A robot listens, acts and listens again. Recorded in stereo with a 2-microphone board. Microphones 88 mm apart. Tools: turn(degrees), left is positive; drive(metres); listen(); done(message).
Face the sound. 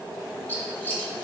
turn(degrees=20)
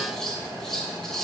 done("Facing the scissors, 1 to 2 m away.")